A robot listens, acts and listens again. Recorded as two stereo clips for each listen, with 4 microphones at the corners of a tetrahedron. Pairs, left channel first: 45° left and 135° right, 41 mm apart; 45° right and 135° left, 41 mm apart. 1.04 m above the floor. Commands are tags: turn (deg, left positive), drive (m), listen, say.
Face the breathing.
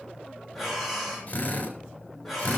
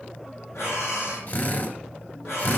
<turn deg="-40"/>
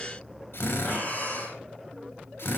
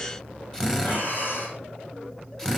<say>Facing the breathing.</say>